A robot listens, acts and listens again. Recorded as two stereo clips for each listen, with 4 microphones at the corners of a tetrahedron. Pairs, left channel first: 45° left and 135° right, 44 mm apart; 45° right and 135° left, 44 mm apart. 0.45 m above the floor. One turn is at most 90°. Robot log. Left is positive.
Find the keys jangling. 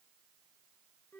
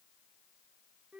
cmd idle
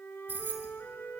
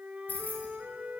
note: The keys jangling: 95° right.
cmd yaw -90
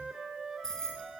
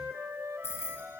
note: The keys jangling is now 30° right.
cmd yaw -30
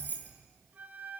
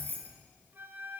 end: Facing the keys jangling, over 4 m away.